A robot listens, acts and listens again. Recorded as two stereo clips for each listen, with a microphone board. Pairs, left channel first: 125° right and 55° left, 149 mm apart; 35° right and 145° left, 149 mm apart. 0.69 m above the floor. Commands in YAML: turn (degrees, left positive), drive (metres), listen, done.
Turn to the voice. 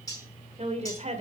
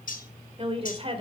turn: 95
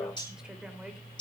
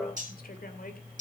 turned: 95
listen: true
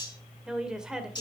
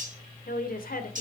turn: -30
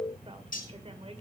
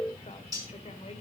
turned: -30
listen: true
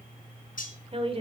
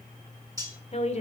done: "Found it: a woman speaking, straight ahead."